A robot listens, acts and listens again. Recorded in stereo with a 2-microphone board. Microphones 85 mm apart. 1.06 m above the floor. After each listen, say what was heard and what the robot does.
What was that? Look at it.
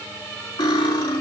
Turn 90° left.
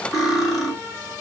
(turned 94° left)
Found it: cutlery clinking, straight ahead, 2 to 4 m away.